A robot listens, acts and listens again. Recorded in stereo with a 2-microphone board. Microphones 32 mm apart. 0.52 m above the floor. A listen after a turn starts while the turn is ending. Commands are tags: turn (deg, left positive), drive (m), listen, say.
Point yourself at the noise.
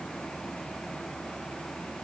<listen/>
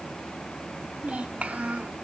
<turn deg="-45"/>
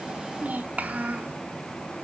<turn deg="-75"/>
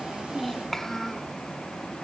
<turn deg="10"/>
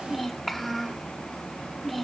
<say>Facing the child speaking, 1 to 2 m away.</say>